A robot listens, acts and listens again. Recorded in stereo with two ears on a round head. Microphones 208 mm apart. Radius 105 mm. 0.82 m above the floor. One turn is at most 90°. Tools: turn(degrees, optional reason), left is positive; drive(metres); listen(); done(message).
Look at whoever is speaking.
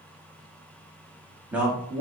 turn(degrees=-30)
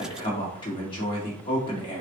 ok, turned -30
turn(degrees=25, reason="So it is at 25° left.")
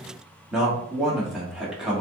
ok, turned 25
done("Found it: a man speaking, straight ahead, 1 to 2 m away.")